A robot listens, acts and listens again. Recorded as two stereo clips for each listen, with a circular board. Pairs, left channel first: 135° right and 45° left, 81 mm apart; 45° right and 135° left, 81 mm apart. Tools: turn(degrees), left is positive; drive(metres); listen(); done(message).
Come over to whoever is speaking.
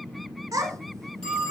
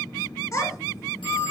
drive(metres=1.0)
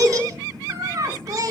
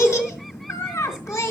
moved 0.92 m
drive(metres=1.0)
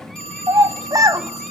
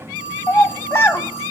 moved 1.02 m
turn(degrees=10)
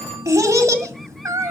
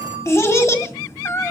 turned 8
drive(metres=1.0)
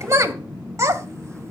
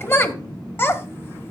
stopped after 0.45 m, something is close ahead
done("Arrived at the child speaking, straight ahead.")